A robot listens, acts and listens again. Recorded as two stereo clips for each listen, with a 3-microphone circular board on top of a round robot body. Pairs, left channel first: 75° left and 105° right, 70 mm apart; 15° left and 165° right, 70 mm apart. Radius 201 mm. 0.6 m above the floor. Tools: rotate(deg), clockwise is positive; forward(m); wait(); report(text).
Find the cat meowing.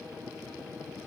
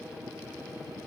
wait()
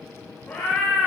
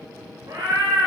rotate(-140)
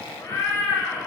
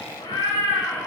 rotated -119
rotate(-20)
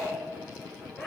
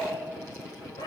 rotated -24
report("Found it: a cat meowing, straight ahead.")